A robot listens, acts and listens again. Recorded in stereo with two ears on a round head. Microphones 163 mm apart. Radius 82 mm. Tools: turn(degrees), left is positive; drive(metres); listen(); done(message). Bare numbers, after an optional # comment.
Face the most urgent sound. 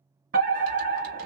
# The fire alarm: about 50° right or 130° right.
turn(-50)
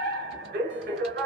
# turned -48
# So it is at 65° right.
turn(-65)
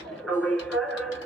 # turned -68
done("Found it: a fire alarm, straight ahead, 2 to 4 m away.")